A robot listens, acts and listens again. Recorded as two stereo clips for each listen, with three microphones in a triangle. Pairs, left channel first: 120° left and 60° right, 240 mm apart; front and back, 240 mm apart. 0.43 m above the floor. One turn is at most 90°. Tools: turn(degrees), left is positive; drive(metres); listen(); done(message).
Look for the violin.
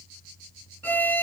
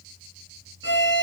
turn(degrees=35)
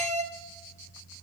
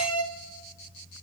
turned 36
done("Facing the violin.")